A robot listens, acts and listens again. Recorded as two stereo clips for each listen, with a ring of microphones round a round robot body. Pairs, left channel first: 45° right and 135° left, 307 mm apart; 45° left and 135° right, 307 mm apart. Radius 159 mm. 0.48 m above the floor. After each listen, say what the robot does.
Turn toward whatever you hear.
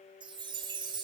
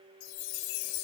Turn 60° left.
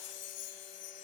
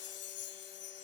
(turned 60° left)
Facing the chime, 1 to 2 m away.